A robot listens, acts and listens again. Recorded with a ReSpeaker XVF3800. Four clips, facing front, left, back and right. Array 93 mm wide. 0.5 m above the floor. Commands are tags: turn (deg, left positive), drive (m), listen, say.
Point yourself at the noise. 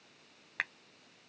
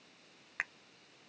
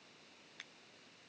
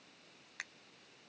<turn deg="35"/>
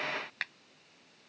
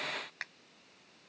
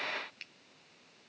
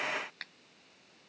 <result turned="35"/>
<turn deg="15"/>
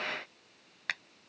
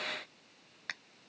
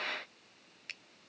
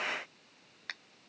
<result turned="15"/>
<say>Facing the finger snap.</say>